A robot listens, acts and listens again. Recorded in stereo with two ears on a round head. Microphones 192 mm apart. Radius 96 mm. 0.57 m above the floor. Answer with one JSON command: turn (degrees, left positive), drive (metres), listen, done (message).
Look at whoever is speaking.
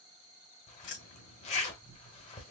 {"listen": true}
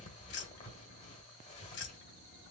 {"listen": true}
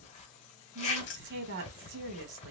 {"turn": -60}
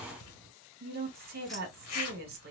{"turn": -50}
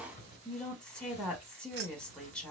{"done": "Facing the woman speaking."}